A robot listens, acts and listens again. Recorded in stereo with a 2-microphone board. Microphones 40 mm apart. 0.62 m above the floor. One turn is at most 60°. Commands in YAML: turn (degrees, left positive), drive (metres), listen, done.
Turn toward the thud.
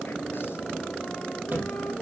turn: -50
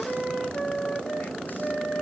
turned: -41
listen: true
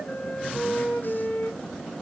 done: "I heard a thud, but can't make it out now. It was about 10° right or 85° right."